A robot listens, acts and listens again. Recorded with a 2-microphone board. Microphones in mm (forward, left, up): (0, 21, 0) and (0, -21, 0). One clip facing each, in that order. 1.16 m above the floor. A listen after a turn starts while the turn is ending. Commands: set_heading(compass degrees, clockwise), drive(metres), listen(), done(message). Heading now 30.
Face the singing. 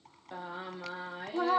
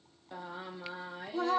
set_heading(0)
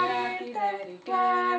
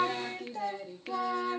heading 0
set_heading(220)
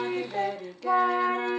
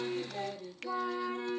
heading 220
set_heading(155)
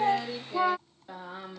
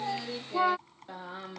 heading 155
done("Facing the singing.")